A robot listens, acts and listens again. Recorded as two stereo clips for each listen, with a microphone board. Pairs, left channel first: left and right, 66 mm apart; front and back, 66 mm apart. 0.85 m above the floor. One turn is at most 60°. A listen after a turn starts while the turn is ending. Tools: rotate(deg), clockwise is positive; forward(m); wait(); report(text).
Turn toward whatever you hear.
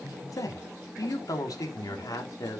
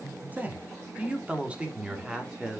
rotate(-60)
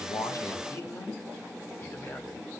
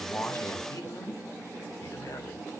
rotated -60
rotate(-40)
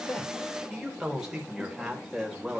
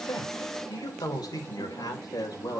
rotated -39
report("Found it: a man speaking, straight ahead, 2 to 4 m away.")